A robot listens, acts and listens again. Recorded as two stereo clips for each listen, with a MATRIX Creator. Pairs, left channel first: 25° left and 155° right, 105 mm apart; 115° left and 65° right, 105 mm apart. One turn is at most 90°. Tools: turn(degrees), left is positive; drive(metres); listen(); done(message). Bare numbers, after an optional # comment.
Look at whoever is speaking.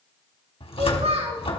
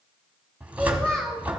# The child speaking: 165° right.
turn(-90)
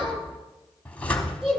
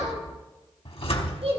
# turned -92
# The child speaking is now 75° right.
turn(-75)
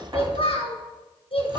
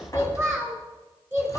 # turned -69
done("Found it: a child speaking, straight ahead.")